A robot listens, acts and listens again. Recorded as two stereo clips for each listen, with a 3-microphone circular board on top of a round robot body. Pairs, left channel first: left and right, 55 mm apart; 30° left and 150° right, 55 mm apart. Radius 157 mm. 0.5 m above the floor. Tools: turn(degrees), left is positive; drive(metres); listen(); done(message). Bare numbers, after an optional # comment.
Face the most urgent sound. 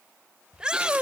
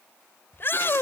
# The shout: 15° right.
turn(-15)
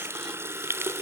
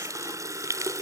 listen()
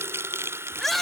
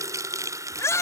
done("Facing the shout.")